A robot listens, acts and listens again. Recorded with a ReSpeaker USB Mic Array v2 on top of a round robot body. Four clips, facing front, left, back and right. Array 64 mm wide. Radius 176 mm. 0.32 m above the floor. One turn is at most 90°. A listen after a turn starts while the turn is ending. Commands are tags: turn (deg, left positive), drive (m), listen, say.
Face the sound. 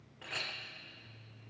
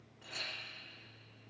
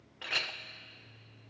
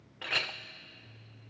<turn deg="-90"/>
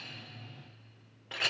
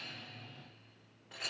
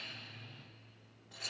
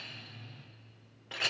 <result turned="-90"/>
<turn deg="-35"/>
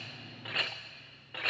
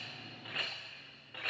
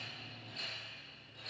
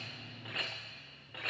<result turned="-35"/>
<say>Facing the clink, under 1 m away.</say>